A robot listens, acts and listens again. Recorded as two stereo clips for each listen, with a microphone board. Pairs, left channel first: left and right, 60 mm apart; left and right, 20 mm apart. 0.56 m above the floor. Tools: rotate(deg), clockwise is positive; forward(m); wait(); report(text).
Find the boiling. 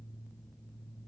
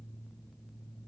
wait()
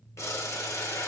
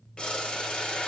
rotate(-60)
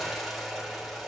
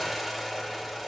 report("Facing the boiling.")